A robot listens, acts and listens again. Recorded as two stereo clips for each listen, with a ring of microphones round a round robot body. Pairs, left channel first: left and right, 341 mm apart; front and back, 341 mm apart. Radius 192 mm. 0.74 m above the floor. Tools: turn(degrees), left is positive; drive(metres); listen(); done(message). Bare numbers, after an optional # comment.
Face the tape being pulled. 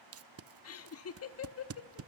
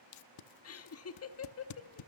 # The tape being pulled: 40° right.
turn(-40)
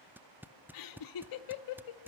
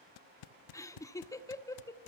done("Found it: tape being pulled, straight ahead.")